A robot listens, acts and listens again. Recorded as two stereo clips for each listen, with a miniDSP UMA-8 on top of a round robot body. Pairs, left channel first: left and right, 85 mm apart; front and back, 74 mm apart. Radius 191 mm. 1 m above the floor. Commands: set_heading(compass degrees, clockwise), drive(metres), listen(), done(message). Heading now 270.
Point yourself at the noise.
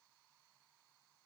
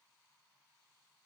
listen()
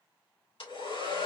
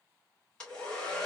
set_heading(190)
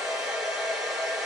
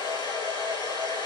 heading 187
done("Found it: a hair dryer, straight ahead.")